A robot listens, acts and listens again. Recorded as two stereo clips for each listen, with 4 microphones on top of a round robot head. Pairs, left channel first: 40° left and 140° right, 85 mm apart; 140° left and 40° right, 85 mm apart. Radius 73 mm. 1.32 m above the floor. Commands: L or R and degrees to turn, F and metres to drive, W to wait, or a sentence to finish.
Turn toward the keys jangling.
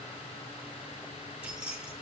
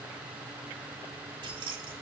R65
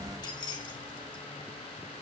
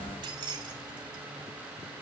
Found it: keys jangling, straight ahead, 2 to 4 m away.